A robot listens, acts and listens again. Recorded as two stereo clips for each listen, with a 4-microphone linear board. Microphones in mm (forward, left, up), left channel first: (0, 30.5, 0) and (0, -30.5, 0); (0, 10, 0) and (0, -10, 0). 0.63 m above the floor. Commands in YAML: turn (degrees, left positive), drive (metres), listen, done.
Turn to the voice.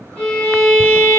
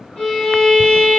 listen: true
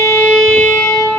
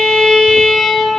listen: true
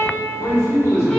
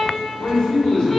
turn: 55
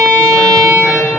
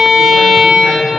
listen: true
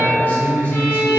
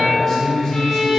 turn: 35
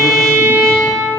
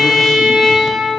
listen: true
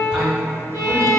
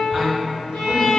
listen: true
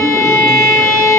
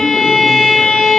done: "Facing where the man speaking came from. I can't hear it now."